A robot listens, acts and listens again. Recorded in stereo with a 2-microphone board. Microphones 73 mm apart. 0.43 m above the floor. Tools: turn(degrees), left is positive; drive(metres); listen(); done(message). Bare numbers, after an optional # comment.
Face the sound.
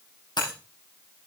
turn(90)
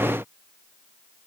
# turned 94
done("Facing where the breaking glass came from. I can't hear it now.")